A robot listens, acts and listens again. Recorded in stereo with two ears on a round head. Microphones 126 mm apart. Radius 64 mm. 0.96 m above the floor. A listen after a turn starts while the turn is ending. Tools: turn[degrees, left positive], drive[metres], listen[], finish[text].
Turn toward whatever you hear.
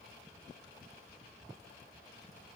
Action: listen[]
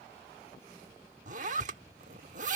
Thought: The zipper: about 60° right or 120° right.
Action: turn[-60]
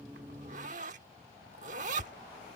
Thought: So it is at 55° right.
Action: turn[-55]
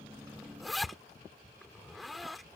Action: finish[Found it: a zipper, straight ahead.]